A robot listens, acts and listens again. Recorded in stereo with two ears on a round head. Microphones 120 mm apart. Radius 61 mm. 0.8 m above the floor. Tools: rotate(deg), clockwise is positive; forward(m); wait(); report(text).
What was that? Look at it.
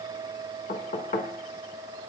rotate(-70)
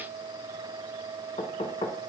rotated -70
rotate(-35)
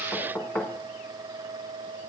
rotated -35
report("Found it: knocking, straight ahead.")